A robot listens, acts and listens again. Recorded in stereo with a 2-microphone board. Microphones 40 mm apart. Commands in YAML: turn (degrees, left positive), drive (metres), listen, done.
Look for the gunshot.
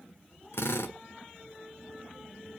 listen: true
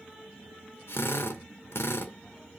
listen: true
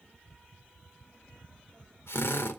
done: "I can't make out a gunshot, only a drill."